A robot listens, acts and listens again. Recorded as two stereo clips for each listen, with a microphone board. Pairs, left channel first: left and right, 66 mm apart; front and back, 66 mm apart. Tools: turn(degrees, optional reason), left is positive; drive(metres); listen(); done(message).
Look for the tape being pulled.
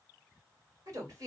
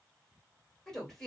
listen()
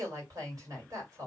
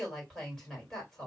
listen()
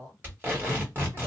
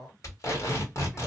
turn(degrees=-35, reason="The tape being pulled: 35° right.")
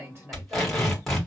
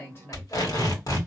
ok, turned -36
done("Found it: tape being pulled, straight ahead, 1 to 2 m away.")